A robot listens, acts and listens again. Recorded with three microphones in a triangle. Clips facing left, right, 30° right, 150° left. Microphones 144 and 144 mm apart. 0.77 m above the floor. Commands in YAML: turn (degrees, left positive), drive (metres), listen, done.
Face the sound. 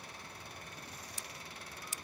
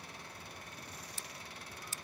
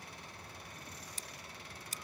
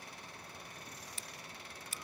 turn: 15
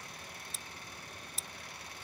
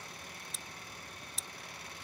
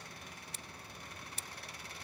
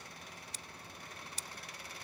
done: "Found it: scissors, straight ahead."